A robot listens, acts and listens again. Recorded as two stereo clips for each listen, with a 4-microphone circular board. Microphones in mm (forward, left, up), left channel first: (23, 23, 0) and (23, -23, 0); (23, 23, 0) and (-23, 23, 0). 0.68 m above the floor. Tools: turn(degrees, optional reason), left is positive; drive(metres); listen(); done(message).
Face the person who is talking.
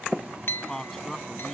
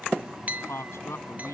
done("Found it: a man speaking, straight ahead.")